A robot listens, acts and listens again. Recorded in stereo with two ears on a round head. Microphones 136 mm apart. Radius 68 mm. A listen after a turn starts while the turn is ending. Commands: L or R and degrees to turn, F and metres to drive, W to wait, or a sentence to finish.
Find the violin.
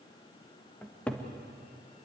W
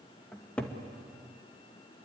W
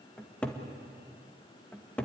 I can't make out a violin to turn to.